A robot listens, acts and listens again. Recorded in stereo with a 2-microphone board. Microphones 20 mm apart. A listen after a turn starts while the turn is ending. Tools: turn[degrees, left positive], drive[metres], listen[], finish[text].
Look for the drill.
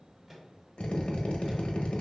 Thought: The drill: about 65° left or 115° left.
Action: turn[65]
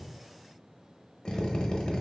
Thought: So it is at 45° left.
Action: turn[45]
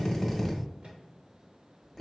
Thought: The drill is now 10° left.
Action: turn[10]
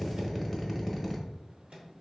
Thought: The drill is now 10° left.
Action: turn[10]
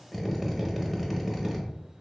Action: finish[Facing the drill.]